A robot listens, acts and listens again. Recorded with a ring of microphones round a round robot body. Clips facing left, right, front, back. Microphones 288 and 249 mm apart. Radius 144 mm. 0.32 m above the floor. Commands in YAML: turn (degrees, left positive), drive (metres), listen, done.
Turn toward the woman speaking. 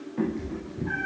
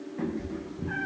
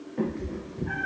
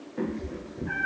listen: true
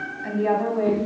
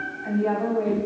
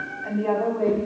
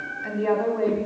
turn: 125
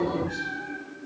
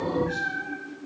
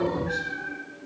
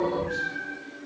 listen: true
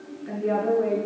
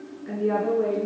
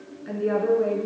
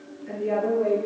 done: "Facing the woman speaking, 2 to 4 m away."